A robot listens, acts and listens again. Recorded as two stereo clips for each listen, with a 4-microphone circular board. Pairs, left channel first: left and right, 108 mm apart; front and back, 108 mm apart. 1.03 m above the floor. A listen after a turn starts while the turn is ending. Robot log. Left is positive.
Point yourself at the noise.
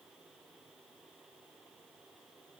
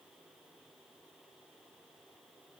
cmd idle
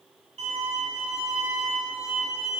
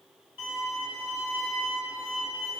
note: The violin: 110° right.
cmd yaw -110
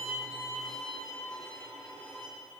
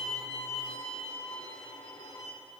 end: Found it: a violin, straight ahead, 2 to 4 m away.